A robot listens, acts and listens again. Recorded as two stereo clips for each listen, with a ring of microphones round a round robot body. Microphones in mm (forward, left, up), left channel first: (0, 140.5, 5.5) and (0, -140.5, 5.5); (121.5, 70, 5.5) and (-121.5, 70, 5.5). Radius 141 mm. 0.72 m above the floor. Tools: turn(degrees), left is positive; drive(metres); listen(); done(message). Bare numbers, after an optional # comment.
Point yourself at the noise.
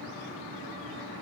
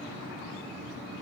listen()
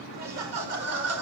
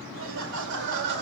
# The laughter: 125° right.
turn(-125)
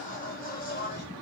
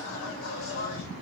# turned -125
# The laughter is now 35° left.
turn(35)
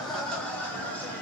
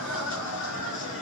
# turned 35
done("Facing the laughter.")